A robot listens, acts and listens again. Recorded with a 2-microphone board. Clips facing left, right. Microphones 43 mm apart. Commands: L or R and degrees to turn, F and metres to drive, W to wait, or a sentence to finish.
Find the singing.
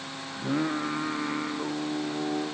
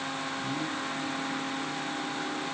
L50
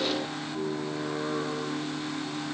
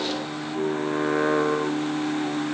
R70
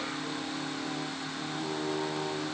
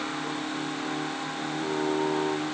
R20
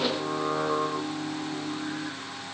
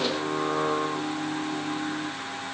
Found it: singing, straight ahead, 1 to 2 m away.